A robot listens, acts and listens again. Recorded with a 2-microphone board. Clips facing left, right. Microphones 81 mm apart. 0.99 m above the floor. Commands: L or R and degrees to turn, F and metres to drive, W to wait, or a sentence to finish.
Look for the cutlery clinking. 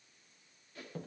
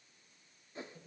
W
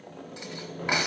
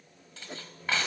L15
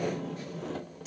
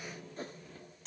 W
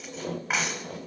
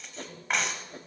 Found it: cutlery clinking, straight ahead, 2 to 4 m away.